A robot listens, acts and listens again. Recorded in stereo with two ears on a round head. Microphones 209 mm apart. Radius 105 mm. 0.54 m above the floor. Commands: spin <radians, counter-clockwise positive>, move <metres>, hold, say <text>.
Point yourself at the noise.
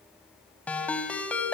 spin 0.52
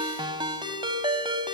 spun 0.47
spin -0.35
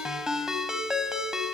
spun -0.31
say Found it: a ringtone, straight ahead, 2 to 4 m away.